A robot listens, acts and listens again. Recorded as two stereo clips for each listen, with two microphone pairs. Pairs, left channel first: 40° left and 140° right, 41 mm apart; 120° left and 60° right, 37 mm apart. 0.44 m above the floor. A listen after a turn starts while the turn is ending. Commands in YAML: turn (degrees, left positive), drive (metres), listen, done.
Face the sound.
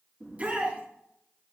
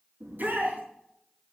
turn: -85
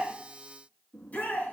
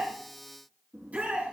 turn: -15
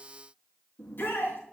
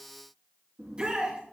done: "Facing the shout."